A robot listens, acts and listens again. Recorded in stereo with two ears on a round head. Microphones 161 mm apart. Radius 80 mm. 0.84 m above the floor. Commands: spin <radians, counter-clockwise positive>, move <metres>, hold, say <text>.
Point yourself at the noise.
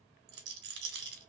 spin -1.13
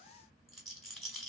say Facing the rattle, 1 to 2 m away.